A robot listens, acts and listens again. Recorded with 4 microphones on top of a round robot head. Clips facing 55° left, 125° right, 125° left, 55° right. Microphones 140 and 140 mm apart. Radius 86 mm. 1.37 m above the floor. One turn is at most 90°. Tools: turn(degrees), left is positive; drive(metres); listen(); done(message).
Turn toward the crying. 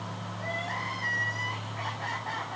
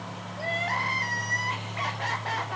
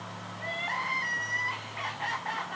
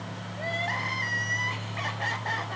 turn(degrees=-90)
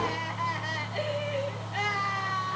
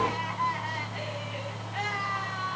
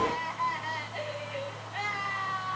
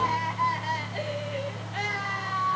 done("Facing the crying.")